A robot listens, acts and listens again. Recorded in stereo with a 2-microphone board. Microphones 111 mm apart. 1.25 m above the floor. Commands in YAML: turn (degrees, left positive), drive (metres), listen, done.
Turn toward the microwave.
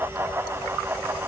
listen: true
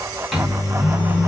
turn: -30
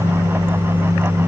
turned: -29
turn: -145
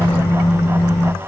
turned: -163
turn: 15
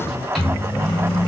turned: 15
done: "Found it: a microwave, straight ahead, under 1 m away."